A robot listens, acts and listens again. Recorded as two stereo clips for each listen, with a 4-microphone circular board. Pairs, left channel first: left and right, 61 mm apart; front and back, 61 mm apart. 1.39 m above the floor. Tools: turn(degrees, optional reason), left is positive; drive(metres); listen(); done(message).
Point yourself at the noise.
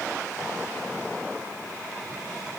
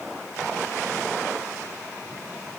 listen()
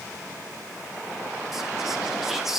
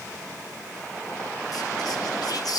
done("Facing the whispering, 1 to 2 m away.")